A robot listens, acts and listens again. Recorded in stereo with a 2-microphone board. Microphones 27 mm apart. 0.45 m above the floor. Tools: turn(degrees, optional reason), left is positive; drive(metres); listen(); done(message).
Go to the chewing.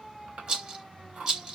turn(degrees=-55, reason="The chewing: about 55° right or 125° right.")
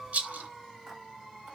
listen()
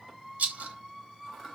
listen()
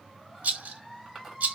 turn(degrees=-10, reason="So it is at 10° right.")
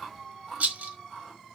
drive(metres=1.0)
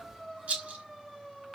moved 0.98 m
listen()
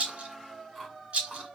drive(metres=1.0)
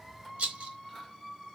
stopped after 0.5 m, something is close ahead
listen()
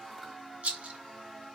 listen()
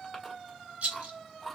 done("I am next to the chewing.")